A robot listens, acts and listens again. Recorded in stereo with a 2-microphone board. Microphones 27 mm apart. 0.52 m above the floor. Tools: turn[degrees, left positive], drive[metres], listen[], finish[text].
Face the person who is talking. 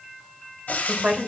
Thought: The woman speaking: about 55° right or 125° right.
Action: turn[-55]
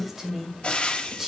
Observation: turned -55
Thought: So it is at 10° right.
Action: turn[-10]
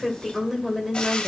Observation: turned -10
Action: finish[Found it: a woman speaking, straight ahead, 2 to 4 m away.]